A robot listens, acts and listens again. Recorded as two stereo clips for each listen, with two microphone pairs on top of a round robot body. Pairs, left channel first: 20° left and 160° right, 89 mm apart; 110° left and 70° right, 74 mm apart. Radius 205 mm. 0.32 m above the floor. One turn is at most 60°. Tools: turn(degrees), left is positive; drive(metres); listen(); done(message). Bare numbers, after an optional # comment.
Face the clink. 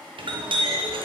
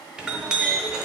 # The clink: 150° right.
turn(-60)
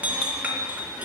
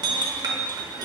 # The clink is now 85° right.
turn(-60)
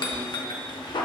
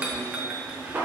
done("Facing the clink.")